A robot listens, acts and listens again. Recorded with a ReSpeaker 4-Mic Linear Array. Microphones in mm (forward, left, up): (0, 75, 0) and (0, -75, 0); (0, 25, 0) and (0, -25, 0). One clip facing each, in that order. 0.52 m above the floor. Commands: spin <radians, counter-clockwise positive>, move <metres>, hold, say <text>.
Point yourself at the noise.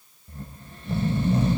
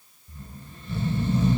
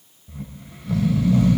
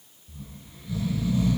spin 1.22
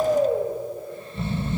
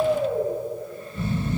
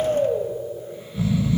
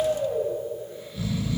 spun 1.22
spin 0.52
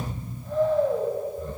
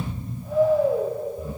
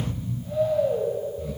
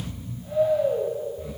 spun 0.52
spin -0.17
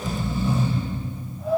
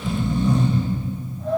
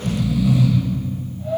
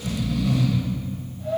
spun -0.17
say Found it: snoring, straight ahead, 2 to 4 m away.